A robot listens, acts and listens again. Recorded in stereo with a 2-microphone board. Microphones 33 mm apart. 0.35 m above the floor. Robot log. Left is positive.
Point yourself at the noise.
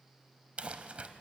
note: The crumpling: about 40° right or 140° right.
cmd yaw -40
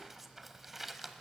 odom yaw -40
note: So it is at 10° right.
cmd yaw -10
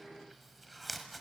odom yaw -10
end: Facing the crumpling, 1 to 2 m away.